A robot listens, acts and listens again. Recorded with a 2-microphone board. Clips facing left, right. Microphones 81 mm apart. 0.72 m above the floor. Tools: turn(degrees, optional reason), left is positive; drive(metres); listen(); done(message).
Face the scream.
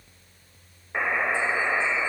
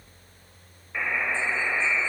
listen()
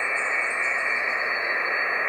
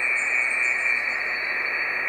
listen()
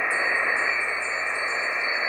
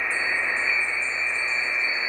done("I can't make out a scream, only a buzzer.")